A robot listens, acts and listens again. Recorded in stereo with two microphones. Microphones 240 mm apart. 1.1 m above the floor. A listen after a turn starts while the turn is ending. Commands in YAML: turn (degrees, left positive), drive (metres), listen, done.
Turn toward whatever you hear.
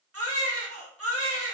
turn: -75
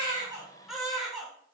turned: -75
done: "Facing the baby crying."